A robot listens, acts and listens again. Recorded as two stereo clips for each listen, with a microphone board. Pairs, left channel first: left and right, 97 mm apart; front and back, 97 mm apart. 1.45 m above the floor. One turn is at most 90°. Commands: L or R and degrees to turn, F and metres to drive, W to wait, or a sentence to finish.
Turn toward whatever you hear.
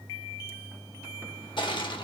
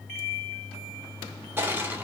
L90
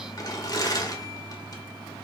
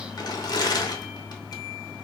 L40
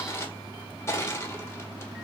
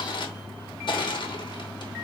L30
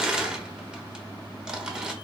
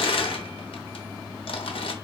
R10
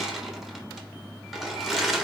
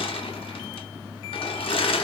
Found it: crushing, straight ahead.